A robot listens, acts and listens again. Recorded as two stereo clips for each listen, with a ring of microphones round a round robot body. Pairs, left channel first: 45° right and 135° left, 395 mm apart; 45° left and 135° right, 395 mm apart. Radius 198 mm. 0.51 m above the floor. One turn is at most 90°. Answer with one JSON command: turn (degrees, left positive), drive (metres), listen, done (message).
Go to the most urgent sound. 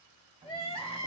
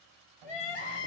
{"turn": 30}
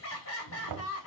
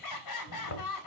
{"turn": 10}
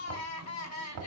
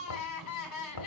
{"drive": 1.0}
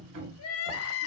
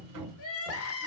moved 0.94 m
{"drive": 1.0}
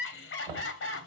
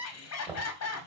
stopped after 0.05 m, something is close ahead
{"done": "Arrived at the crying, straight ahead."}